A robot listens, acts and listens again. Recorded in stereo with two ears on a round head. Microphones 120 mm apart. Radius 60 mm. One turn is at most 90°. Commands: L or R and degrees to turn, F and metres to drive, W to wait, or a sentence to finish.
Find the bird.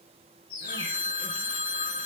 L35
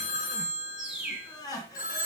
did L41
Facing the bird, 2 to 4 m away.